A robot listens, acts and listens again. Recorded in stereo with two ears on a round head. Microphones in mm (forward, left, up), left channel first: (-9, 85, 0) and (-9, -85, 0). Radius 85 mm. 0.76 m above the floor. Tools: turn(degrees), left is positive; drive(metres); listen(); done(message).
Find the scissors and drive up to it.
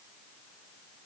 listen()
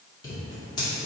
turn(degrees=20)
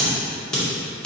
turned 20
drive(metres=1.0)
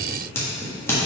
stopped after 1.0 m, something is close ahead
turn(degrees=15)
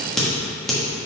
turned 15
done("I am next to the scissors.")